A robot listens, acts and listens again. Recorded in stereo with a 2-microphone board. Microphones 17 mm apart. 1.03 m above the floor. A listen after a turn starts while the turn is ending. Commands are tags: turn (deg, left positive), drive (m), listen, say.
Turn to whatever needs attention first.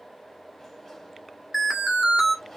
<turn deg="-30"/>
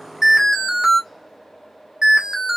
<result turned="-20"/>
<turn deg="-150"/>
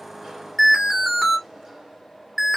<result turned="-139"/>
<turn deg="-10"/>
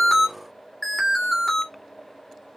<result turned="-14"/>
<say>Found it: an alarm, straight ahead, 2 to 4 m away.</say>